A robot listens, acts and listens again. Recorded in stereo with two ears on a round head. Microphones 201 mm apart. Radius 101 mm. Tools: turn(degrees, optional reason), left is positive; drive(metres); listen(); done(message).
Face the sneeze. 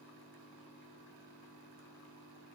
listen()
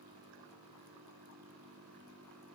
listen()
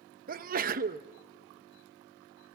turn(degrees=-40, reason="The sneeze: about 40° right or 140° right.")
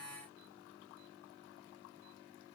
listen()
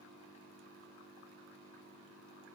done("I heard a sneeze, but can't make it out now. It was about straight ahead or 100° right.")